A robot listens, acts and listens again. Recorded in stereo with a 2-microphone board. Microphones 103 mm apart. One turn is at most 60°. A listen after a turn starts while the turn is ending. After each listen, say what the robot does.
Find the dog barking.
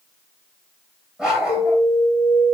Turn 30° right.
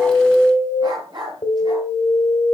Turn 60° right.
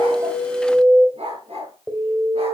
Turn 60° right.
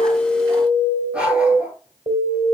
Turn 10° right.
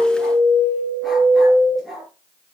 Found it: a dog barking, straight ahead.